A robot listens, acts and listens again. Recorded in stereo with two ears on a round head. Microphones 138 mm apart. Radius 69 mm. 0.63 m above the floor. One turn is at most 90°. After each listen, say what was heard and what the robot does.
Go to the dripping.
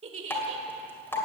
Turn 30° left.
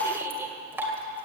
So it is at 15° right. Turn 15° right.
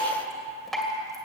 Drive 1.0 m forward.
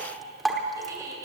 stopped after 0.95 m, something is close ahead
I am next to the dripping.